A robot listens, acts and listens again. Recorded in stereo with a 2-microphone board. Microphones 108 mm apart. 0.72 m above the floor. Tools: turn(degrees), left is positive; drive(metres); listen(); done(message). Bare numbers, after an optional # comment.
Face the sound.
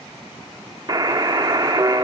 # The buzzer: about 35° right or 145° right.
turn(-35)
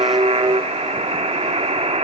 # So it is at 115° right.
turn(-115)
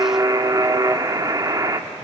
# The buzzer is now 35° right.
turn(-35)
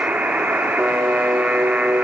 # The buzzer is now 15° right.
turn(-15)
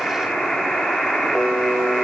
done("Facing the buzzer, under 1 m away.")